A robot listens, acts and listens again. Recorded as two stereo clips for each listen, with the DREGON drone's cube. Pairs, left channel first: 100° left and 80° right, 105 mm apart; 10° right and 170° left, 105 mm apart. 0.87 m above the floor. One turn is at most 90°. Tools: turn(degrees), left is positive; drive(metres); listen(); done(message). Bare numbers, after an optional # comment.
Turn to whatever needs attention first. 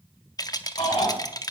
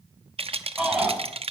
# The shout: 85° left.
turn(85)
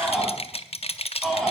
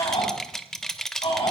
# The shout is now 10° left.
turn(10)
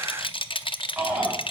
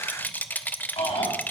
done("Facing the shout.")